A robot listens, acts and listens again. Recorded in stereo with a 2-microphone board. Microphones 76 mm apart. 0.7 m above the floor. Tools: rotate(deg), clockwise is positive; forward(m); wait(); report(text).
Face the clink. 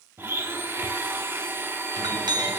rotate(90)
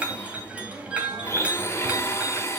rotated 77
rotate(20)
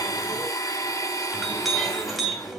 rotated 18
report("Found it: a clink, straight ahead, 2 to 4 m away.")